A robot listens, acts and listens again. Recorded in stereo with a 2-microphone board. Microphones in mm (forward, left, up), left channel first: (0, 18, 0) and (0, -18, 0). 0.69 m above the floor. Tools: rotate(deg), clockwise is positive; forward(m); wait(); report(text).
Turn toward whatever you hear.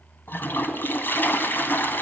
rotate(-70)
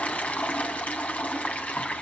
rotate(-45)
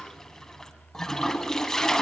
rotate(-15)
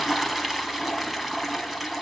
report("Found it: a toilet flushing, straight ahead, 2 to 4 m away.")